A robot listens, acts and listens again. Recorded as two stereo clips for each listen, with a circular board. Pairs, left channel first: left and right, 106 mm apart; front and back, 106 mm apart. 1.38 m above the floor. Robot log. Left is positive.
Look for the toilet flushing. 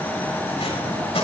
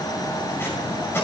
cmd idle
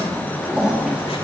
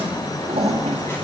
note: The toilet flushing: 170° right.
cmd yaw -170
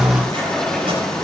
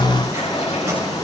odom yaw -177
end: Facing the toilet flushing.